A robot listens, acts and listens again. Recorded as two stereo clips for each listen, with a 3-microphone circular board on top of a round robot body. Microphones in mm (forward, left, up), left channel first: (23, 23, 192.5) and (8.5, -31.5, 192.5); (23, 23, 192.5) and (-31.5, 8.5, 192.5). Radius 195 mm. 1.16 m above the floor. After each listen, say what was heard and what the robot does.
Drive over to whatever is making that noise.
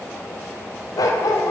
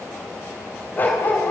The dog barking: 75° left. Turn 75° left.
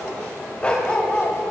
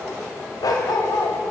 Drive 1.0 m forward.
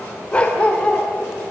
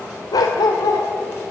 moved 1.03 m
Drive 1.0 m forward.
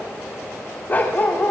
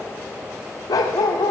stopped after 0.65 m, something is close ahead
The dog barking is now 15° left. Turn 15° left.
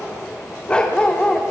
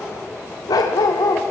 I am next to the dog barking.